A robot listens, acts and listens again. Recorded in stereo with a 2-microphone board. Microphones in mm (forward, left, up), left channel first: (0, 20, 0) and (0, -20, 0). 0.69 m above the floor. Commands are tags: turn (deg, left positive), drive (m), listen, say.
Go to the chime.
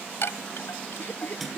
<turn deg="70"/>
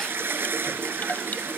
<listen/>
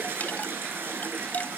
<turn deg="40"/>
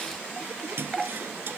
<drive m="1.0"/>
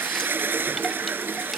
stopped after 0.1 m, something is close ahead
<listen/>
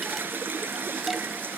<listen/>
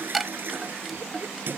<say>Something is in my way. I am facing the chime but have not reached it.</say>